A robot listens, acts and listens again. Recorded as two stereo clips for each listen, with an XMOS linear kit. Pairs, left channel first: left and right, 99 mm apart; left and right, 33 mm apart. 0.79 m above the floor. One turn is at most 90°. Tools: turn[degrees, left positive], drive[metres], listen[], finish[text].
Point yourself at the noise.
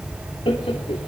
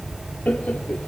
Thought: The laughter: about 65° left or 115° left.
Action: turn[65]
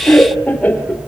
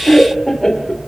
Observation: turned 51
Thought: So it is at 15° left.
Action: turn[15]
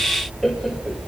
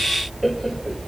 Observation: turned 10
Action: finish[Facing the laughter.]